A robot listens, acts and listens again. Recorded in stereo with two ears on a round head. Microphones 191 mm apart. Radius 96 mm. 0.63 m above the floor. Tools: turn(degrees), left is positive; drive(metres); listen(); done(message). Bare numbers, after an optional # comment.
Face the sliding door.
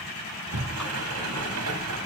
turn(-90)
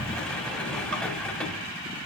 done("Found it: a sliding door, straight ahead.")